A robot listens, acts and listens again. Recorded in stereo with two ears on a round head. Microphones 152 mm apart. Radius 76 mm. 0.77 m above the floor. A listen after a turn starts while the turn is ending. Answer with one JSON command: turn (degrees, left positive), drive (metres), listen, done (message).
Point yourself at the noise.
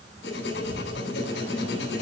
{"turn": 75}
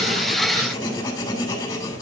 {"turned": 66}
{"turn": 25}
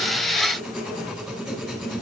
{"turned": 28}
{"done": "Found it: writing, straight ahead, 2 to 4 m away."}